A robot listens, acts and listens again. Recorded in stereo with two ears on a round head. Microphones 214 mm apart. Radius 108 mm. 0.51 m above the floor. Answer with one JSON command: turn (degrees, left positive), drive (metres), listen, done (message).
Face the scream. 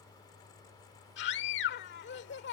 {"turn": 50}
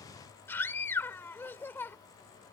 {"turn": 10}
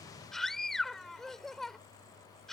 {"done": "Found it: a scream, straight ahead."}